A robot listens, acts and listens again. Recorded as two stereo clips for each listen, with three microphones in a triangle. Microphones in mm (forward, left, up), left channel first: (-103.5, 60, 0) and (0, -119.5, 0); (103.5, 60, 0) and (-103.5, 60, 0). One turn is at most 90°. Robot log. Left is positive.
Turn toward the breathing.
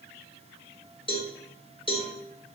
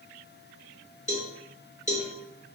cmd idle
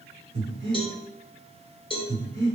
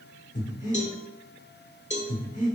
note: The breathing: 50° right.
cmd yaw -50
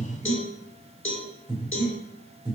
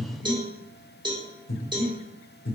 end: Facing the breathing, under 1 m away.